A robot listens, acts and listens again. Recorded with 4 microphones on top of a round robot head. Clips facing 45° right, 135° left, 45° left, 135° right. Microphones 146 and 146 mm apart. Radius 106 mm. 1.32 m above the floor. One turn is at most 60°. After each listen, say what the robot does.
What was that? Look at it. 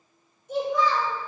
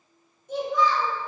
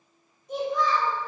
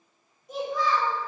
Turn 60° left.
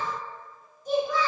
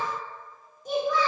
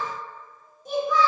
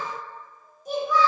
Turn 60° left.
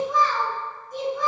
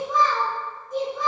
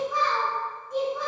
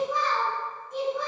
Turn 60° left.
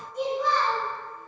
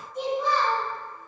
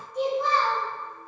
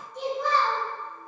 Turn 45° left.
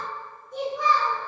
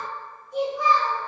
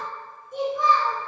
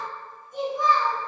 Found it: a child speaking, straight ahead, 2 to 4 m away.